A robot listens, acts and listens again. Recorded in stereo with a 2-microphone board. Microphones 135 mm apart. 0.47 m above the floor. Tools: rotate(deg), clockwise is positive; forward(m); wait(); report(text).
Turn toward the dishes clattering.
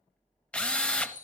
rotate(65)
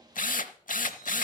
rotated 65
wait()
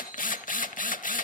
wait()
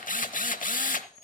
report("Found it: dishes clattering, straight ahead, over 4 m away.")